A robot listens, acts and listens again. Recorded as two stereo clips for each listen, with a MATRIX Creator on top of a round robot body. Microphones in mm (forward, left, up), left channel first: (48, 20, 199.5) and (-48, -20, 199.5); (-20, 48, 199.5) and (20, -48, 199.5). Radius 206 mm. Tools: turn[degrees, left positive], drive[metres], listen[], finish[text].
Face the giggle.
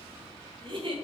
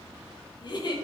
Thought: The giggle: 160° left.
Action: turn[160]
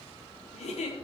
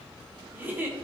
Action: finish[Found it: a giggle, straight ahead, 1 to 2 m away.]